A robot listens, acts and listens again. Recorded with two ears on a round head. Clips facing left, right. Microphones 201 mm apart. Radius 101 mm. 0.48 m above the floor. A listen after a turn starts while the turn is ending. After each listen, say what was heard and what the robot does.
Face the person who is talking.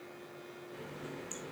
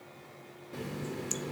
Keep listening.
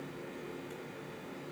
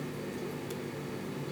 Keep listening.
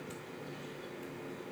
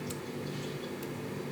I can't make out anyone speaking to turn to.